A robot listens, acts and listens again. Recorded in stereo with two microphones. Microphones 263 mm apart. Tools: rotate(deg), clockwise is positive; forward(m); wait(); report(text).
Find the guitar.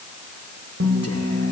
rotate(90)
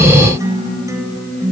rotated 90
rotate(10)
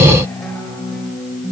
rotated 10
report("Facing the guitar, over 4 m away.")